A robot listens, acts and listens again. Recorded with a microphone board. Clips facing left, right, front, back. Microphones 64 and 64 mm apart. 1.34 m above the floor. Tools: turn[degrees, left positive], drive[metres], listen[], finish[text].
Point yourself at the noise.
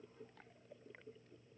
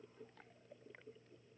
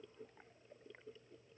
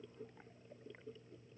Action: listen[]
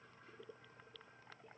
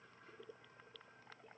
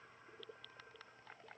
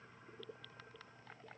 Action: listen[]
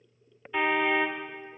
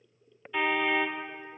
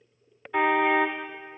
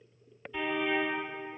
Thought: The car horn: 15° left.
Action: turn[15]
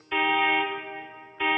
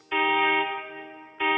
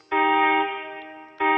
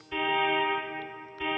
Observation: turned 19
Action: finish[Found it: a car horn, straight ahead, 2 to 4 m away.]